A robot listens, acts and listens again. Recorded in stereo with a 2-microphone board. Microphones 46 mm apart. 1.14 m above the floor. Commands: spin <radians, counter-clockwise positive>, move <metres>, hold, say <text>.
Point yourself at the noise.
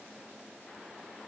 hold
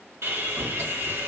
spin -1.22
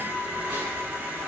spin -0.61
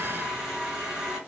say Found it: sawing, straight ahead, 1 to 2 m away.